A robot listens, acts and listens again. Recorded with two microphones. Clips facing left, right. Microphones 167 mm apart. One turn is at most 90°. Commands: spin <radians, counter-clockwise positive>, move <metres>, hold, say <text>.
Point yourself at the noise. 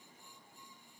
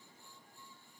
hold
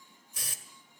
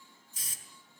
spin 1.13
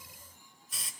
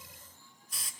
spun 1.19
say Found it: a hiss, straight ahead.